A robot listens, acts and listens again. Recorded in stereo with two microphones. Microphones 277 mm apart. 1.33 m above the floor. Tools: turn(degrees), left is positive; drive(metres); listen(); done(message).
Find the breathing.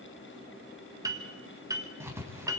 listen()
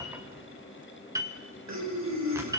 turn(degrees=-75)
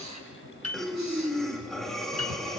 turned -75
done("Found it: breathing, straight ahead.")